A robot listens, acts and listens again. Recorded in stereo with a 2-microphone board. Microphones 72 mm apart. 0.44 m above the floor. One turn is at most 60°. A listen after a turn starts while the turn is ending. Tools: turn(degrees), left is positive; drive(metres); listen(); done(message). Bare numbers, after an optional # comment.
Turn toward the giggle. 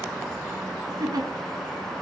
# The giggle: about 65° right or 115° right.
turn(-60)
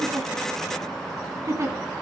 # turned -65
# So it is at 45° right.
turn(-45)
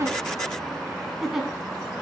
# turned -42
done("Facing the giggle, 2 to 4 m away.")